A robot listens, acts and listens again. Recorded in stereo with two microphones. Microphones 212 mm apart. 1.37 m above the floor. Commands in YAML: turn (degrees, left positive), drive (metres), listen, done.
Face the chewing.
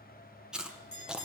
turn: -30
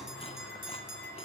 listen: true
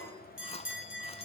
turn: 30
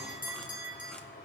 listen: true
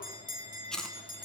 done: "Facing the chewing, under 1 m away."